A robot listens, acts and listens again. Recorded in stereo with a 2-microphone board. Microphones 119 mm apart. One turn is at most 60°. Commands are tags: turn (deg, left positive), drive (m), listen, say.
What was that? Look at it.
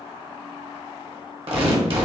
<turn deg="-50"/>
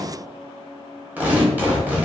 <turn deg="-15"/>
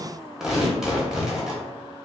<say>Facing the tearing paper.</say>